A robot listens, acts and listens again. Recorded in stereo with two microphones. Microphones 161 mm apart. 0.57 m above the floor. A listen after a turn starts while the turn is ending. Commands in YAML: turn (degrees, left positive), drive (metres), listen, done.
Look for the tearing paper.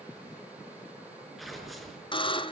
turn: 30
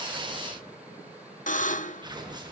turn: -30
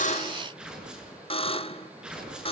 done: "Facing the tearing paper."